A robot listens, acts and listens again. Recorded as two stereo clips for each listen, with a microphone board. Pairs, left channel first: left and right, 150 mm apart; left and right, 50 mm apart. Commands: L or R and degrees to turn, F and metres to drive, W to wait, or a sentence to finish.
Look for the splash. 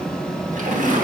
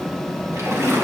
R60
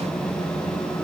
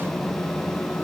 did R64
W
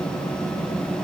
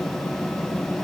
I heard a splash, but can't make it out now. It was about 5° left or 55° right.